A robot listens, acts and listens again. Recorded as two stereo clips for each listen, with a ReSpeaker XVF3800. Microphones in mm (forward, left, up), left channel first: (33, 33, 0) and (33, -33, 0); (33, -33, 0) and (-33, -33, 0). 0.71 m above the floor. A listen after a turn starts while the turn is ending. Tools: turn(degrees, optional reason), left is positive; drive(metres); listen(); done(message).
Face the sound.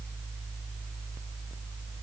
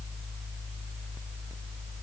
listen()
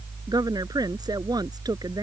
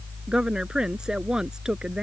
turn(degrees=-100, reason="The woman speaking: 100° right.")
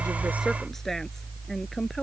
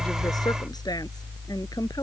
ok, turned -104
listen()
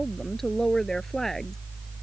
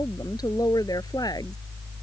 done("Found it: a woman speaking, straight ahead.")